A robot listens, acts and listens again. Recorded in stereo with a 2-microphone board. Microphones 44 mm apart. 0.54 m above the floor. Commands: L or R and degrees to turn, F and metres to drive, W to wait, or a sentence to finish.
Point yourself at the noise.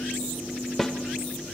L30
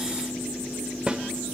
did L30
R25
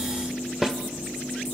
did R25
R10
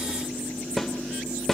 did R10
Found it: a snare drum, straight ahead.